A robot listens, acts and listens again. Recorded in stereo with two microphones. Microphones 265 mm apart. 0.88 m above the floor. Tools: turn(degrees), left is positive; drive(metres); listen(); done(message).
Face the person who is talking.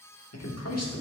turn(degrees=70)
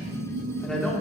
done("Found it: a man speaking, straight ahead, 1 to 2 m away.")